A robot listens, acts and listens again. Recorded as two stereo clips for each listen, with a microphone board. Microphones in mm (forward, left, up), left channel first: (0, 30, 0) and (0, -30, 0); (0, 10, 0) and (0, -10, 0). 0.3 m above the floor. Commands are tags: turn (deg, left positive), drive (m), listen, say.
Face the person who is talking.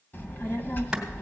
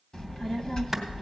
<turn deg="35"/>
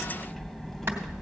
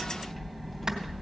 <say>Found it: a child speaking, straight ahead.</say>